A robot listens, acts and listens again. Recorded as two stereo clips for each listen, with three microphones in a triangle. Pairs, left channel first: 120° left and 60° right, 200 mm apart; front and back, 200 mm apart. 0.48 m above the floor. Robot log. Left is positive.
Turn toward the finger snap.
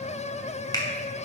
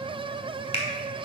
note: The finger snap: 55° left.
cmd yaw +55
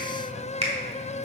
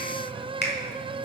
note: The finger snap is now 10° right.
cmd yaw -10
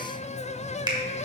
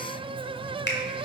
end: Found it: a finger snap, straight ahead.